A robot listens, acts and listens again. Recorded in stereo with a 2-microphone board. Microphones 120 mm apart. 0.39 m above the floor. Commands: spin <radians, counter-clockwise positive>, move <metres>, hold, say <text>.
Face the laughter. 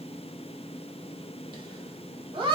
spin -0.79
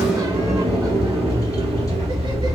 hold
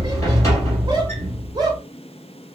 spin -0.70
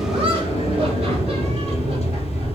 hold
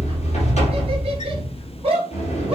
spin -0.87
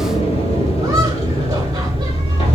hold
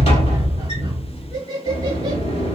spin -0.52
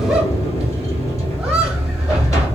hold
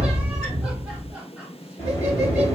hold
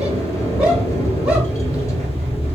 say I heard laughter from this way, but can't make it out now.